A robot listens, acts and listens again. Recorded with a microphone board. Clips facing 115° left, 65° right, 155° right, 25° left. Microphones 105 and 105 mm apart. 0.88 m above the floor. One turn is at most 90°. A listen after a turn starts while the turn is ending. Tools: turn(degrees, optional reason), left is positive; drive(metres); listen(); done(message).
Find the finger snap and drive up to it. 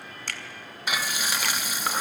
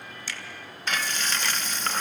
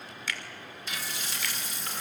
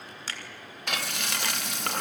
turn(degrees=80, reason="The finger snap: 80° left.")
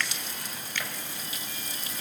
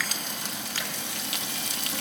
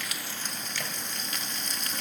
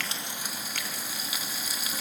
listen()
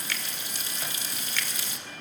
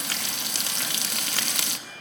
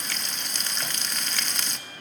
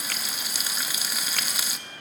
listen()
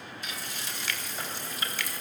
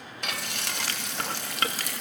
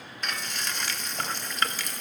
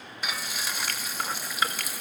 turn(degrees=-15, reason="The finger snap is now 15° right.")
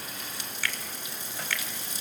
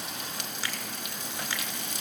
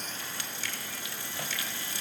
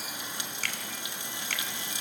drive(metres=1.0)
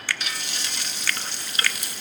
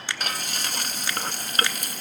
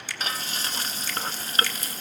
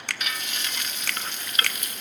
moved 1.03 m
drive(metres=1.0)
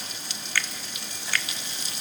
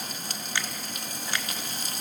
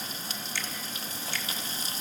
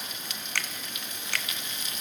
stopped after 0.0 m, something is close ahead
done("I am next to the finger snap.")